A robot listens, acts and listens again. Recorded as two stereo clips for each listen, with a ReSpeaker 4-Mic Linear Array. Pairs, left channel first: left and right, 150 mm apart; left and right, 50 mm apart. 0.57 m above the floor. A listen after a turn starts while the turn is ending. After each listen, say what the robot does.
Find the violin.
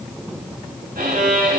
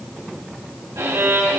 Turn 90° right.
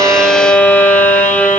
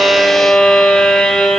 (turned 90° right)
Turn 15° left.
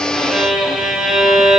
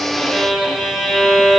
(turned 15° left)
Facing the violin.